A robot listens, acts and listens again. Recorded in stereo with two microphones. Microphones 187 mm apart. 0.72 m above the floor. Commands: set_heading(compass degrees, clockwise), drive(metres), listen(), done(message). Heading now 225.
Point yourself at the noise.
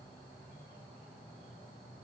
listen()
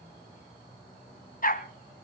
set_heading(175)
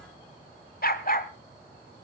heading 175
set_heading(125)
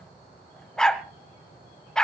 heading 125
done("Found it: a dog barking, straight ahead, 1 to 2 m away.")